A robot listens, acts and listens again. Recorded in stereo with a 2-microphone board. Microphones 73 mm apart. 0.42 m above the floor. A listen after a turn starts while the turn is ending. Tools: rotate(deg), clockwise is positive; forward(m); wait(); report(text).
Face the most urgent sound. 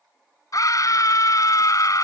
rotate(-55)
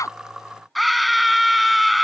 report("Facing the scream.")